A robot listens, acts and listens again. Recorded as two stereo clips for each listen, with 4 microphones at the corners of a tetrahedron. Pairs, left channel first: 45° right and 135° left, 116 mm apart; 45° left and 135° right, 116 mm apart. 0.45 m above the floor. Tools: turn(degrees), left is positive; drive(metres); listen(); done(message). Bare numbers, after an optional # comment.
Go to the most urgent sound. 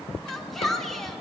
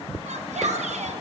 # The shout: 130° right.
turn(-130)
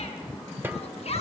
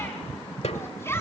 # The shout is now 25° right.
turn(-25)
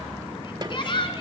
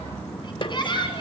drive(1.0)
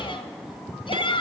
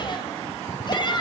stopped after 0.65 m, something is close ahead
done("Something is in my way. I am facing the shout but have not reached it.")